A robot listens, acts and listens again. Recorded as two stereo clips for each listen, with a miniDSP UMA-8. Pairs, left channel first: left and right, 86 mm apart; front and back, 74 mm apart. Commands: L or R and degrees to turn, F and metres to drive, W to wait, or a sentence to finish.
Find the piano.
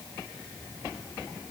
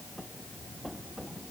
W
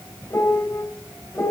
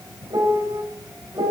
L150
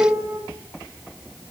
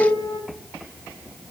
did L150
R35
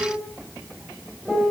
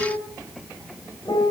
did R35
L10
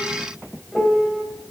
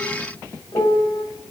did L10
Facing the piano.